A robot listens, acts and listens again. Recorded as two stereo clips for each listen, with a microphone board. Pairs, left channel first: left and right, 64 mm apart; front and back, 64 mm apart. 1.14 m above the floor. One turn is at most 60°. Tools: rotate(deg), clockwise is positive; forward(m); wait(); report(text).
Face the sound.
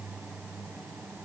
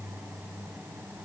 wait()
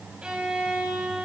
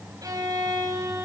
rotate(60)
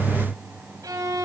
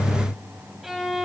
rotate(60)
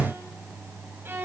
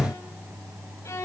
rotate(40)
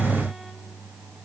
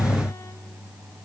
wait()
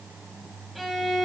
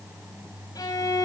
report("Found it: a violin, straight ahead, 2 to 4 m away.")